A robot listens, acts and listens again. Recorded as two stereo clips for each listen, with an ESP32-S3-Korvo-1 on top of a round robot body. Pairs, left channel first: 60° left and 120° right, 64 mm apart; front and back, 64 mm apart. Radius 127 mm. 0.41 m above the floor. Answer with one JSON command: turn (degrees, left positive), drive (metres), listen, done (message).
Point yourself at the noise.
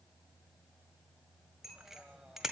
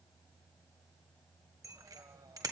{"turn": 155}
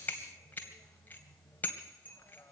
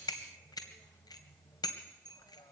{"done": "Facing the bicycle bell."}